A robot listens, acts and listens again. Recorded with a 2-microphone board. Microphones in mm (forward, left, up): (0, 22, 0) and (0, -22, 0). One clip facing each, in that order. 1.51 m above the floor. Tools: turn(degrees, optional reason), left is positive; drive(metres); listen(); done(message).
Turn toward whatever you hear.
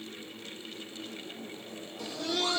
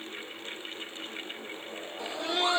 turn(degrees=-25, reason="The laughter: about 25° right or 155° right.")
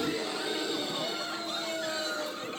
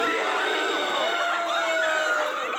turn(degrees=-130, reason="So it is at 130° right.")
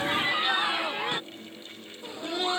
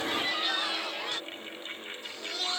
turn(degrees=20, reason="The laughter is now 20° left.")
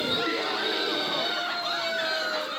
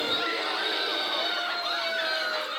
done("Found it: laughter, straight ahead.")